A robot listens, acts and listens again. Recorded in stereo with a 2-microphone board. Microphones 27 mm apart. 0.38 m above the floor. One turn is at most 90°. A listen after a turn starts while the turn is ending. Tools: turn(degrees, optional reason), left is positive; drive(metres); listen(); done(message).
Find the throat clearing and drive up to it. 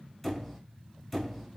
listen()
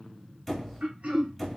turn(degrees=-60, reason="The throat clearing: about 60° right or 120° right.")
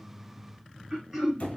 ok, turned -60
turn(degrees=-15, reason="So it is at 15° right.")
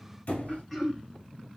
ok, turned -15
drive(metres=1.0)
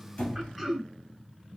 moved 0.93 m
drive(metres=1.0)
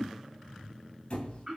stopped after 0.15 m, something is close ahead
done("Arrived at the throat clearing, straight ahead.")